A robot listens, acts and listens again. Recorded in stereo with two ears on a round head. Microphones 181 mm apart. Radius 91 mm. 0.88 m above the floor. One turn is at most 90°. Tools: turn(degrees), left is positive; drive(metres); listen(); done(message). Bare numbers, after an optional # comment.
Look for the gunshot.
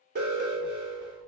listen()
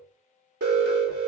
listen()
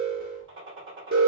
# The gunshot: about 65° right or 115° right.
turn(-65)
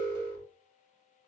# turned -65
listen()
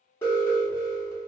done("I heard a gunshot, but can't make it out now. It was about straight ahead or 50° right.")